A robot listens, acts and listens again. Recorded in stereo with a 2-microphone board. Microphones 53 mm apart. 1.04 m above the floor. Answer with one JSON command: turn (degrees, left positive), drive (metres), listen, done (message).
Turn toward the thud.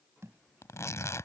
{"turn": -60}
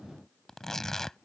{"listen": true}
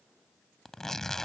{"done": "I heard a thud, but can't make it out now. It was about straight ahead or 60° right."}